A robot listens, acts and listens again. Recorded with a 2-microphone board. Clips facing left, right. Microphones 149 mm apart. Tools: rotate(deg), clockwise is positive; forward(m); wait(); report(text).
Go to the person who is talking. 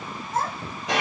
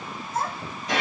rotate(-75)
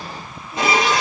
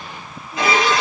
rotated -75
wait()
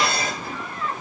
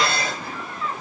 forward(1.0)
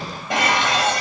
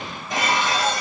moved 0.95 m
wait()
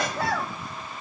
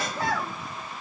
forward(1.0)
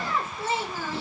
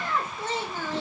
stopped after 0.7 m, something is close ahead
rotate(-10)
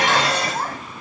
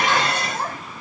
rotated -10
report("I am next to the child speaking.")